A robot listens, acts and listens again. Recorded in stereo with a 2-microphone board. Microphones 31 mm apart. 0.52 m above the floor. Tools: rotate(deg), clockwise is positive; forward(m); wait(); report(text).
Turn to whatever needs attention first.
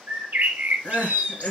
rotate(-65)
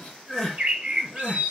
report("Facing the crying, 1 to 2 m away.")